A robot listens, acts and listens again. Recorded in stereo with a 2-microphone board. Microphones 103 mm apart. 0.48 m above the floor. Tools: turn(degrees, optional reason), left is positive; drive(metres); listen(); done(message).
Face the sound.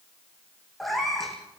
turn(degrees=30)
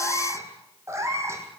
turn(degrees=-30, reason="So it is at 30° right.")
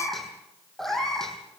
done("Found it: a cat meowing, straight ahead.")